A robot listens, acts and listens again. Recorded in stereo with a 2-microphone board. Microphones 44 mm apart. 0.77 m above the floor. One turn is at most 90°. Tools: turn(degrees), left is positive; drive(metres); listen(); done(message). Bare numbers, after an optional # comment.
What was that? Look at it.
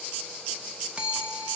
# The bell: about 30° right or 150° right.
turn(-30)
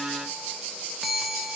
done("Found it: a bell, straight ahead, 1 to 2 m away.")